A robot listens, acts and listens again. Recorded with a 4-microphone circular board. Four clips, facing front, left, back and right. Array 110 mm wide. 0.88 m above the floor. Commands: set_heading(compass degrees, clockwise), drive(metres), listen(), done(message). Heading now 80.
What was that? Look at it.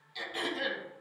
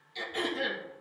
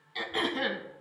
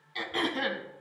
set_heading(210)
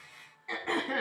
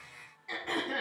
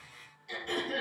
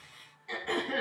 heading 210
done("Facing the throat clearing, 1 to 2 m away.")